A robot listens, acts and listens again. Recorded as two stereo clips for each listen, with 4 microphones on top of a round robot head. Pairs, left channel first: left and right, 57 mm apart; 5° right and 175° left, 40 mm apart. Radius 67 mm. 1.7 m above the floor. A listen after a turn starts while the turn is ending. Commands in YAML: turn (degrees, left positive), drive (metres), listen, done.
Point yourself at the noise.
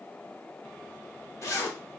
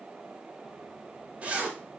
turn: 120
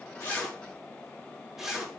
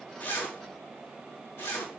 turn: -10
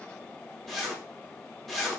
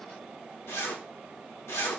done: "Found it: a zipper, straight ahead."